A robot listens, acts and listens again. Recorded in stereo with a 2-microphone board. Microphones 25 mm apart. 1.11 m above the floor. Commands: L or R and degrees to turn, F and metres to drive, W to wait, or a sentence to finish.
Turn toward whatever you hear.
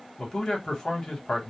L25
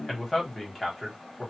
Found it: a man speaking, straight ahead.